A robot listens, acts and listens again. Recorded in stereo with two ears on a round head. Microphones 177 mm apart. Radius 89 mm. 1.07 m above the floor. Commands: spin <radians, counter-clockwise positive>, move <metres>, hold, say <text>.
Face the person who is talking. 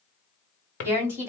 spin -0.52
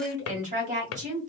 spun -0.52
spin -2.44
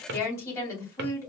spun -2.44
spin 0.26
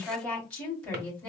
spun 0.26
say Facing the woman speaking, 2 to 4 m away.